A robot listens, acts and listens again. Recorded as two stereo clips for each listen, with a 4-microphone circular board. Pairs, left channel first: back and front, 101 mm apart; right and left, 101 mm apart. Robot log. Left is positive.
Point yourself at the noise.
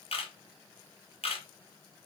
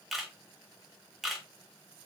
note: The camera shutter: straight behind.
cmd yaw +180
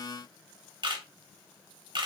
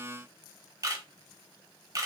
note: The camera shutter is now 40° left.
cmd yaw +40
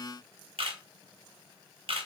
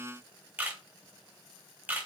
note: The camera shutter is now 20° left.
cmd yaw +20
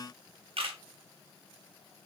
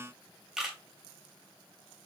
end: Found it: a camera shutter, straight ahead.